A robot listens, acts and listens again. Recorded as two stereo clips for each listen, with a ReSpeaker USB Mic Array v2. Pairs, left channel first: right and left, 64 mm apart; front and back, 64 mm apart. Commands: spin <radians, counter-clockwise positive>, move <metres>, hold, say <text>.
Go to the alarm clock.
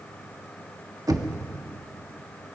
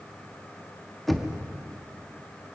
hold
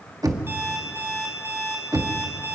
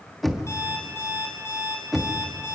spin 0.70
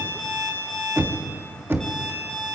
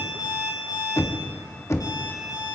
move 1.0
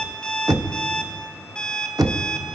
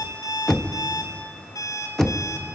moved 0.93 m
spin -0.17
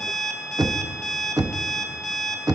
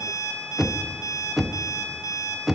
move 1.0
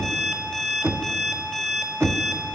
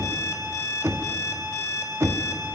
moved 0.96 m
move 1.0
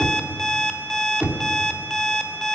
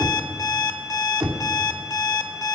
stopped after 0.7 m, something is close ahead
say I am next to the alarm clock.